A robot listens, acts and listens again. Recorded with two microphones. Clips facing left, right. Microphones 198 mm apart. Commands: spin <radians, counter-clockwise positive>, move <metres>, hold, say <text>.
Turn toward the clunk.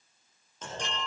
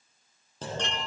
spin -0.61
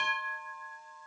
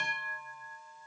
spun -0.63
hold
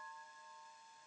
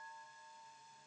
say I heard a clunk, but can't make it out now. It was about straight ahead or 110° right.